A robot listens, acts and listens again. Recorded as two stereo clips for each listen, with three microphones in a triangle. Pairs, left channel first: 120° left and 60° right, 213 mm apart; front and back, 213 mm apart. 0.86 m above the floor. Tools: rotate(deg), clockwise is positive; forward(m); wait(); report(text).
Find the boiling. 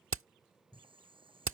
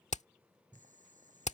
rotate(125)
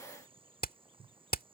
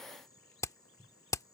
report("Facing the boiling.")